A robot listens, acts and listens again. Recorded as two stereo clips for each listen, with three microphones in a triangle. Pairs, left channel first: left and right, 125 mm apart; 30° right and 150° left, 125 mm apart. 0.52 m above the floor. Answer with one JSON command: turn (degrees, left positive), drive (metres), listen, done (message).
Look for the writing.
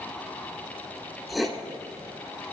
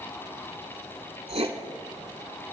{"turn": 180}
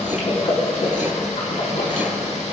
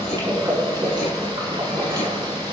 {"listen": true}
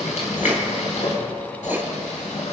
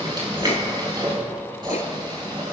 {"listen": true}
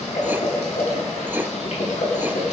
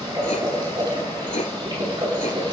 {"turn": -15}
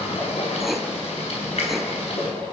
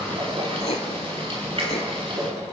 {"listen": true}
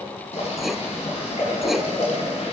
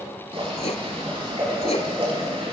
{"done": "Found it: writing, straight ahead, 1 to 2 m away."}